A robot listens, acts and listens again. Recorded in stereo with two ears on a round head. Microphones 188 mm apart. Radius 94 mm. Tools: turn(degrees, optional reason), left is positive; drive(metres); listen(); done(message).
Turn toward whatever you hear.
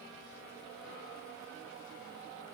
listen()
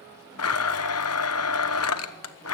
turn(degrees=90)
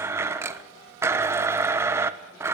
turn(degrees=-10, reason="So it is at 10° right.")
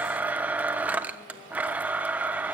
done("Facing the blender.")